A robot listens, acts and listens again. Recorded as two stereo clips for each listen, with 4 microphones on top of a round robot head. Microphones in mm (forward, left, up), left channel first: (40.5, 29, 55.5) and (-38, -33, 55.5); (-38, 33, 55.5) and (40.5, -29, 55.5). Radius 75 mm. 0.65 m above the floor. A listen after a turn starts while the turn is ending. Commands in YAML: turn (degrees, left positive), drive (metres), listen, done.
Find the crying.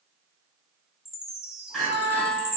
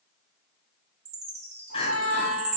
turn: 120
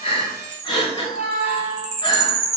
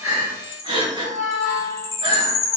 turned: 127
done: "Facing the crying, 1 to 2 m away."